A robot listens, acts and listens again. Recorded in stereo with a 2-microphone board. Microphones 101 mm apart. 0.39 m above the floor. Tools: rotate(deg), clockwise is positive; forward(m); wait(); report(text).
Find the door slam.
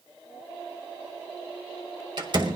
rotate(50)
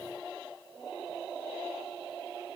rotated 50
wait()
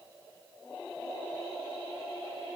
report("I heard a door slam, but can't make it out now. It was about straight ahead or 80° right.")